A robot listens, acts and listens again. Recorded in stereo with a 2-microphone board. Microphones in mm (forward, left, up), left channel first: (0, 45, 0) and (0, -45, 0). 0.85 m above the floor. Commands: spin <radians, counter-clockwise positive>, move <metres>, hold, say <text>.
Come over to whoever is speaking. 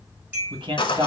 spin -1.05
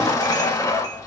hold
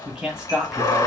move 1.0
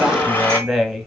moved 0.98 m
move 1.0
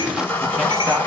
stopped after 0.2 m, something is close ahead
hold
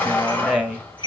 say I am next to the man speaking.